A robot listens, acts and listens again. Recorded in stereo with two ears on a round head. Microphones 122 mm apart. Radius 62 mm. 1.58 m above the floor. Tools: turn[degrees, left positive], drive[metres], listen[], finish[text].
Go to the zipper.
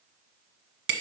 Action: listen[]
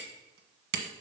Action: listen[]
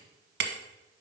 Action: finish[I can't make out a zipper to turn to.]